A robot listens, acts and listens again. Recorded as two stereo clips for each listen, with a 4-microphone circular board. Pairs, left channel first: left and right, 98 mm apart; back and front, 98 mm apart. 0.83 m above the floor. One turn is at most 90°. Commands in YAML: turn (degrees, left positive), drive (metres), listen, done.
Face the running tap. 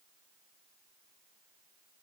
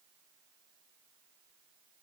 listen: true
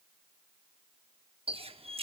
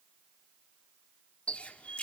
turn: -90
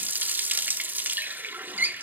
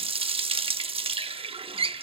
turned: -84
turn: -20
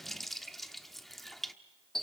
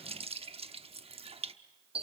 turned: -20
done: "Found it: a running tap, straight ahead."